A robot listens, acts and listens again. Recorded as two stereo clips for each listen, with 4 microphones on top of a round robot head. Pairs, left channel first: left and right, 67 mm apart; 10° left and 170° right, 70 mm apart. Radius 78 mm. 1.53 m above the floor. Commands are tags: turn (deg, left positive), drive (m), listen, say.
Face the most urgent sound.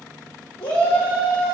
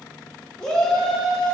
<turn deg="90"/>
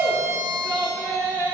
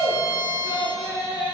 <turn deg="25"/>
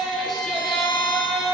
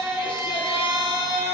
<say>Facing the shout.</say>